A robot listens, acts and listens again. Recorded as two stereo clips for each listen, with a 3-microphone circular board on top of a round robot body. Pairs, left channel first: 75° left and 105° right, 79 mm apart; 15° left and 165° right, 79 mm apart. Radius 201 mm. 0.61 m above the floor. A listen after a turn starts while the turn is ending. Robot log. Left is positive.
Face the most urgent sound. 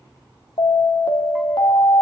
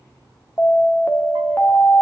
note: The alarm: 80° left.
cmd yaw +80
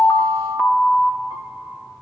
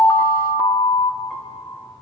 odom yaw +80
end: Facing the alarm, 1 to 2 m away.